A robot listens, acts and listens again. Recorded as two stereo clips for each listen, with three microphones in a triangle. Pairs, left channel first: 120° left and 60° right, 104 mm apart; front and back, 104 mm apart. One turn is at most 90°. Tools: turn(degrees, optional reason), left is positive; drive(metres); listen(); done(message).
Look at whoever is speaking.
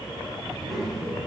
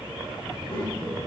turn(degrees=30, reason="The child speaking: 30° left.")
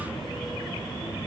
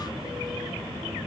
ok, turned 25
listen()
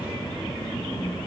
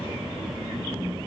turn(degrees=20, reason="The child speaking is now 20° left.")
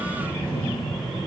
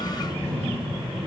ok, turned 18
turn(degrees=15, reason="The child speaking is now 15° left.")
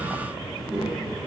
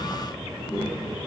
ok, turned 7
turn(degrees=15, reason="The child speaking is now 15° left.")
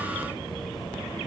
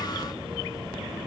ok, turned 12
listen()
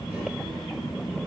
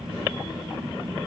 done("Facing the child speaking, 2 to 4 m away.")